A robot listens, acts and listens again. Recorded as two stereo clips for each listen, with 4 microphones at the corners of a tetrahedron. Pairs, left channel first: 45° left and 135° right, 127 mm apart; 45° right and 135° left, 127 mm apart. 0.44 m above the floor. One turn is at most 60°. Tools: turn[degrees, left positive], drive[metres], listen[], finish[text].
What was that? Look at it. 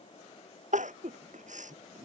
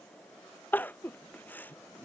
Thought: The crying: 120° right.
Action: turn[-60]
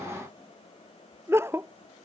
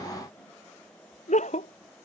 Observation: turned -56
Thought: The crying is now 65° right.
Action: turn[-60]
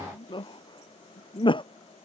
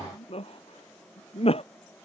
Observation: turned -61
Action: finish[Found it: crying, straight ahead.]